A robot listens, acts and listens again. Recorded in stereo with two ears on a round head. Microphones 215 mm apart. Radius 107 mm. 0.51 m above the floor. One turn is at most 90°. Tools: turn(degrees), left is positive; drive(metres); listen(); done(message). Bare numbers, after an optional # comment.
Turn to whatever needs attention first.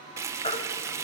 # The baby crying: about 25° left or 155° left.
turn(25)
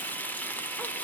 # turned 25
listen()
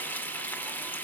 listen()
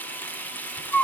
done("Facing the baby crying, 1 to 2 m away.")